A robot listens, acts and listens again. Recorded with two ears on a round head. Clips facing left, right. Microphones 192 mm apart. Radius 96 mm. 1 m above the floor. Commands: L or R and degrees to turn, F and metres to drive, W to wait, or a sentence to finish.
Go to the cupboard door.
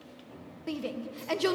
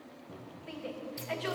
R40
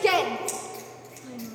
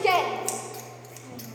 W
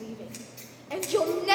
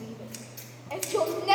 W
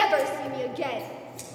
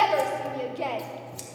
I heard a cupboard door, but can't make it out now. It was about straight ahead or 100° right. I did not reach it.